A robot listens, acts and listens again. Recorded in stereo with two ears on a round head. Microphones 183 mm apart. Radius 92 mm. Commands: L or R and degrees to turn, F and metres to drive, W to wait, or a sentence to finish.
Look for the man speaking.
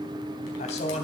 L35
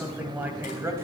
R10
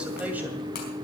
W
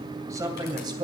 R20
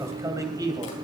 R20
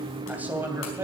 R10
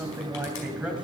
Facing the man speaking, 2 to 4 m away.